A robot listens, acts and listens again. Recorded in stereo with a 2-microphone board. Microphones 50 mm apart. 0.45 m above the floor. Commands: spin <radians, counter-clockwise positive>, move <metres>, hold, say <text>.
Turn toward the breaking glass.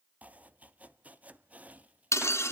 spin 1.22
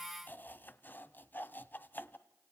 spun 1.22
hold
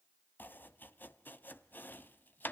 say I heard breaking glass, but can't make it out now. It was about straight ahead or 40° left.